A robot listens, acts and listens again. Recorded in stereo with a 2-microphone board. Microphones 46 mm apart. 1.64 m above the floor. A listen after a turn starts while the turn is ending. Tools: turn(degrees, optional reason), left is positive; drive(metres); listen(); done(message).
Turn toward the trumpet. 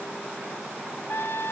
turn(degrees=60, reason="The trumpet: about 60° left or 120° left.")
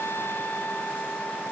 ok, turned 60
turn(degrees=50, reason="So it is at 50° left.")
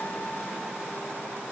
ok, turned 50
listen()
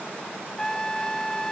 turn(degrees=15, reason="The trumpet is now 15° left.")
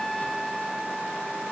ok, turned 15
done("Facing the trumpet.")